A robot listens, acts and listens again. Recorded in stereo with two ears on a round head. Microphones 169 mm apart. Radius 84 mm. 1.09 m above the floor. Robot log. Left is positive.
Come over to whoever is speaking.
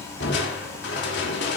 cmd idle
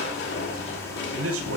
cmd yaw -90
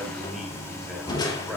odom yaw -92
cmd fwd 1.0
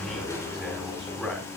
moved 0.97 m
cmd fwd 1.0
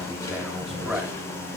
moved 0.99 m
cmd idle
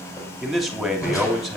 cmd fwd 1.0
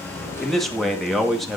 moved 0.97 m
cmd fwd 1.0
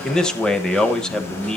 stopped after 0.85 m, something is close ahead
end: I am next to the man speaking.